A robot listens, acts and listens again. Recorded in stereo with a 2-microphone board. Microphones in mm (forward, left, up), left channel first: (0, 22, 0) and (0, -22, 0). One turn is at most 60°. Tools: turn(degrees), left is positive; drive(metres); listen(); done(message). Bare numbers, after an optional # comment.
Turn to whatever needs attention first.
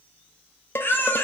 # The baby crying: about 60° left or 120° left.
turn(60)
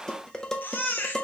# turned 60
# So it is at 55° left.
turn(55)
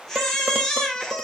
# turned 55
# The baby crying is now 10° left.
turn(10)
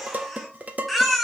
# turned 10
done("Found it: a baby crying, straight ahead.")